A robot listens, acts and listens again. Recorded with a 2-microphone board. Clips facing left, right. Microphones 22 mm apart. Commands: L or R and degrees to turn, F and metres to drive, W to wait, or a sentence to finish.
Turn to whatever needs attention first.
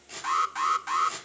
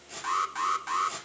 R30
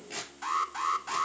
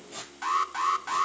R145
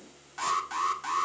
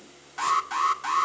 R10
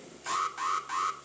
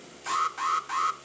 Found it: an alarm, straight ahead, 1 to 2 m away.